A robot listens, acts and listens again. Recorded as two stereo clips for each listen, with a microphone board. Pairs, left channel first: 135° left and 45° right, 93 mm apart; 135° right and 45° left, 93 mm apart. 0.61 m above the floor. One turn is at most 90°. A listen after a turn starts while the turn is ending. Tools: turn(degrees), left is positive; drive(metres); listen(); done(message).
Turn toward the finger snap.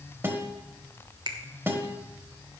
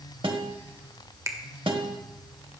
turn(degrees=-10)
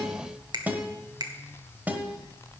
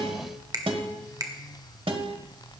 done("Facing the finger snap.")